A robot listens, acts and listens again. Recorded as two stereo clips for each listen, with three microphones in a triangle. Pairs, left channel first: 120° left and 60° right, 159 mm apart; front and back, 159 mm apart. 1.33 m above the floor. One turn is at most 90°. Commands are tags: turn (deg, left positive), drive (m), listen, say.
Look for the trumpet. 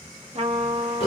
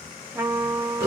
<turn deg="-90"/>
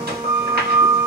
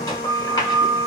<turn deg="15"/>
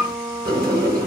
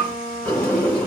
<say>Found it: a trumpet, straight ahead.</say>